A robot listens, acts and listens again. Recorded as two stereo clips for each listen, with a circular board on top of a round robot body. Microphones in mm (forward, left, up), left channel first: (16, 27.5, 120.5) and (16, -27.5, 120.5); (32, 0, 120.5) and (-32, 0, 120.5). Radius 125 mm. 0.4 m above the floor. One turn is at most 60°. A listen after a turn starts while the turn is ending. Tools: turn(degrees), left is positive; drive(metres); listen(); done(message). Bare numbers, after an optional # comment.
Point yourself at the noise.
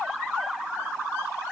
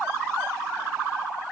listen()
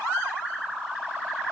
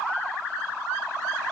listen()
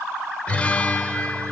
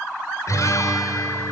# The guitar: 20° left.
turn(20)
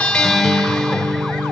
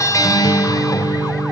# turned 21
done("Found it: a guitar, straight ahead.")